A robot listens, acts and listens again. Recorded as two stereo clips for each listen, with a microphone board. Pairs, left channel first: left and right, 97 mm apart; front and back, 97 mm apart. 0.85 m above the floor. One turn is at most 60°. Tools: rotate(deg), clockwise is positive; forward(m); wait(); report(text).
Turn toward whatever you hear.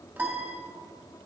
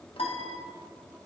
rotate(20)
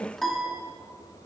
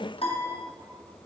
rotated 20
report("Facing the piano, under 1 m away.")